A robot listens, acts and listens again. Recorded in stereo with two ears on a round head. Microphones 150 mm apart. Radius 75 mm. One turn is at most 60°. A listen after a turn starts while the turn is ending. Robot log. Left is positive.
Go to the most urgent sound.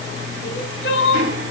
note: The crying: about 75° left or 105° left.
cmd yaw +60
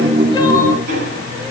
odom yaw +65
cmd idle
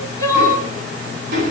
note: So it is at 20° left.
cmd yaw +20
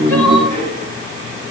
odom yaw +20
cmd idle
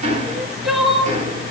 cmd fwd 1.0
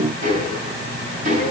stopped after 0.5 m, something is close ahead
cmd idle
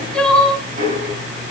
end: Something is in my way. I am facing the crying but have not reached it.